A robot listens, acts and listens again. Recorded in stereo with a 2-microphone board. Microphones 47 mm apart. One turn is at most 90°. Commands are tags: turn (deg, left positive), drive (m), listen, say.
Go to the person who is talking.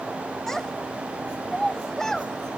<turn deg="30"/>
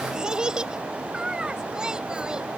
<turn deg="-15"/>
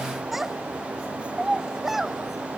<drive m="1.0"/>
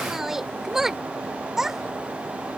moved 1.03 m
<turn deg="-10"/>
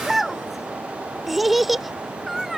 <drive m="1.0"/>
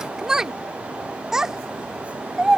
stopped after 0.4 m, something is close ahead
<turn deg="-10"/>
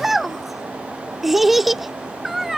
<say>Arrived at the child speaking, straight ahead.</say>